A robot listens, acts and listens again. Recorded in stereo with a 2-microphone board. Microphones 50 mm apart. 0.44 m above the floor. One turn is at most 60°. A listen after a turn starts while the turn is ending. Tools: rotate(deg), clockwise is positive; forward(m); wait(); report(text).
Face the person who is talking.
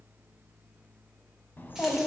rotate(-40)
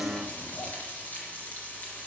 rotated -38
rotate(-60)
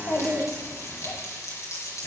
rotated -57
rotate(-45)
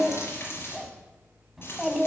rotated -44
report("Facing the child speaking.")